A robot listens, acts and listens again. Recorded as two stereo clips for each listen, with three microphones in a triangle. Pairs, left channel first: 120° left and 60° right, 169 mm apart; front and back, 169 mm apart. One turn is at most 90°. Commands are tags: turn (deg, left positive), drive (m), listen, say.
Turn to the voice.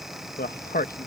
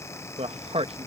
<turn deg="90"/>
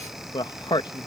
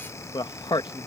<turn deg="60"/>
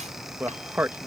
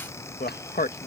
<turn deg="20"/>
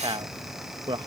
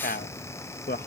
<say>Found it: a man speaking, straight ahead.</say>